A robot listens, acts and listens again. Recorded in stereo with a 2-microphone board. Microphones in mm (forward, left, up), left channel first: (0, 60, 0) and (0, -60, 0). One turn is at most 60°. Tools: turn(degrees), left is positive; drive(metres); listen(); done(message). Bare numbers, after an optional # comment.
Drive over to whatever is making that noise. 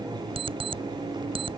# The alarm clock: about 45° right or 135° right.
turn(-45)
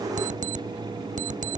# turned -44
# So it is at 90° right.
turn(-60)
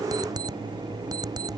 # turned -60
# The alarm clock is now 30° right.
turn(-30)
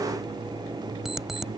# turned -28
drive(1.0)
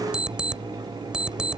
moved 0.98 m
drive(1.0)
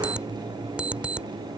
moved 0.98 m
# The alarm clock is now 10° right.
turn(-10)
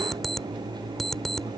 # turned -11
drive(1.0)
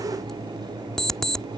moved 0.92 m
drive(1.0)
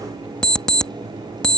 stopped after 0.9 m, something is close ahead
done("Arrived at the alarm clock, straight ahead.")